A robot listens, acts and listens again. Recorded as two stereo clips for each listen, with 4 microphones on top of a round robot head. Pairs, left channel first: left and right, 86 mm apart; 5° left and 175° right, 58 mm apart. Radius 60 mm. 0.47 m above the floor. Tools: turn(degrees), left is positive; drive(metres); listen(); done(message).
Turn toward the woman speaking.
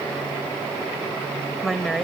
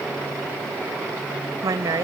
turn(degrees=180)
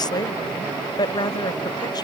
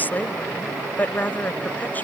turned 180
turn(degrees=60)
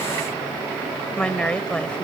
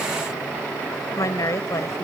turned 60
turn(degrees=10)
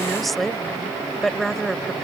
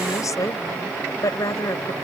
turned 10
done("Found it: a woman speaking, straight ahead.")